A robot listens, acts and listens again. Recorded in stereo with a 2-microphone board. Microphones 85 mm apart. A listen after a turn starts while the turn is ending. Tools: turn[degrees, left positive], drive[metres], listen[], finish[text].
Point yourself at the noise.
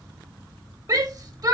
Thought: The shout: about 45° right or 135° right.
Action: turn[-45]
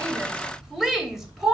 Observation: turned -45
Action: finish[Found it: a shout, straight ahead, 2 to 4 m away.]